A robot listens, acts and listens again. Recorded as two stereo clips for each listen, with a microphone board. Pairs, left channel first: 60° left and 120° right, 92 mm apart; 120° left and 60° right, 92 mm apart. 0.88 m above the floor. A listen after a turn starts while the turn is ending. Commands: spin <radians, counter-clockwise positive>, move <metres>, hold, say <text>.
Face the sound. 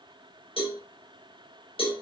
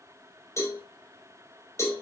spin 1.05
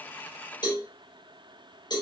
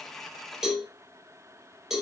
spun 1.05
spin 0.35
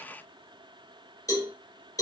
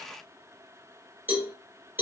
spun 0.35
say Facing the cowbell, over 4 m away.